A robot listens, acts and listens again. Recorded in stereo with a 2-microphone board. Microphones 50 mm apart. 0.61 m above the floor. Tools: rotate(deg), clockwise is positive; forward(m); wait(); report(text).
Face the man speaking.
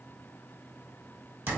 wait()
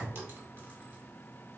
wait()
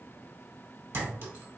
report("I can't make out a man speaking, only a clink.")